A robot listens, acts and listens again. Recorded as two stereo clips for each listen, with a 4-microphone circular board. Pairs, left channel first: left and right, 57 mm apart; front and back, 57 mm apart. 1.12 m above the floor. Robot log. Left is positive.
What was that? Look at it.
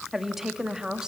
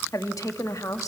note: The woman speaking: 15° right.
cmd yaw -15
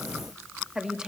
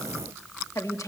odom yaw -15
note: The woman speaking is now 10° right.
cmd yaw -10
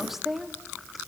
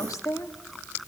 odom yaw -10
end: Found it: a woman speaking, straight ahead, 2 to 4 m away.